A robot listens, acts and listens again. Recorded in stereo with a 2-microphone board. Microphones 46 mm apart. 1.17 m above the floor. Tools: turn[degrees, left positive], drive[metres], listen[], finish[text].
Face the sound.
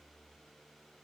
Action: listen[]
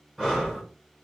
Action: turn[-30]
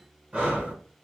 Thought: So it is at 135° right.
Action: turn[-135]
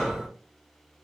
Thought: The breathing is now 10° left.
Action: turn[10]
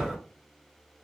Action: finish[Found it: breathing, straight ahead, 1 to 2 m away.]